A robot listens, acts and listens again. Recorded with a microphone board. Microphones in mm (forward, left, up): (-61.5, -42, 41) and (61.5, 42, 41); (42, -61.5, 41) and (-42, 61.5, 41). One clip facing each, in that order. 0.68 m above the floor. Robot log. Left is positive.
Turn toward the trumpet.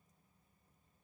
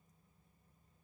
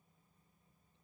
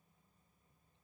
cmd idle
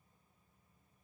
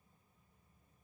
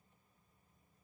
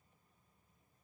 cmd idle
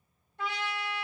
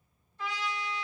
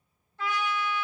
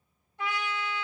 note: The trumpet: 160° right.
cmd yaw -160
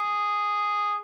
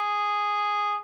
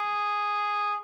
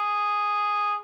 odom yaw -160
end: Found it: a trumpet, straight ahead, 1 to 2 m away.